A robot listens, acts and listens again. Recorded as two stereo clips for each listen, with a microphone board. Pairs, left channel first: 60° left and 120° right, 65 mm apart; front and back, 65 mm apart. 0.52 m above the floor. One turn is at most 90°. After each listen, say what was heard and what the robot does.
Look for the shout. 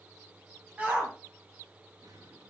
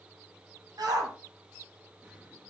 The shout: 170° left. Turn 90° left.
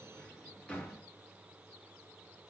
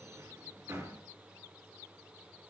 Nothing new. It was at 80° left. Turn 80° left.
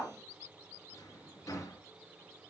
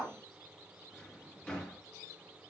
Found it: a shout, straight ahead.